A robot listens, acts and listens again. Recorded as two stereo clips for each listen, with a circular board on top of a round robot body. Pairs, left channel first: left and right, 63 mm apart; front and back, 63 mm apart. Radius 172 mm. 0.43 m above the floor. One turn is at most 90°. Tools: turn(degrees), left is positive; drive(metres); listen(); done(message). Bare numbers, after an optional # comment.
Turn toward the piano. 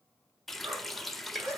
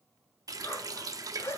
listen()
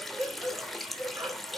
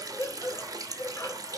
listen()
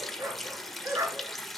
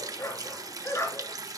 done("I can't make out a piano to turn to.")